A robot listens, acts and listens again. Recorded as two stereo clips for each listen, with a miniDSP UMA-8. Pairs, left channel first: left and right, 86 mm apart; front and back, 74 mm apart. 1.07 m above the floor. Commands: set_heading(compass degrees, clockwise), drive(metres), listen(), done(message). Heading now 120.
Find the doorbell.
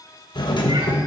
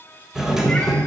set_heading(25)
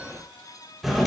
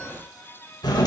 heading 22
done("Found it: a doorbell, straight ahead.")